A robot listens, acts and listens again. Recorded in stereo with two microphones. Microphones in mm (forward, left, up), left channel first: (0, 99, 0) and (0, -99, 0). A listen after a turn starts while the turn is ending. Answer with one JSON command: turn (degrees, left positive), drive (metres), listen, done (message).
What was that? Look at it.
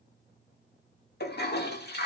{"turn": 55}
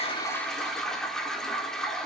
{"done": "Found it: a toilet flushing, straight ahead, 1 to 2 m away."}